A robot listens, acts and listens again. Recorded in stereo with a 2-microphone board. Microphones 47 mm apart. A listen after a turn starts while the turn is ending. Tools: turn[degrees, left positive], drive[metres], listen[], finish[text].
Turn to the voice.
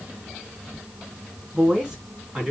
Thought: The woman speaking: about 20° right or 160° right.
Action: turn[-20]
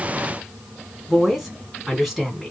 Action: finish[Found it: a woman speaking, straight ahead.]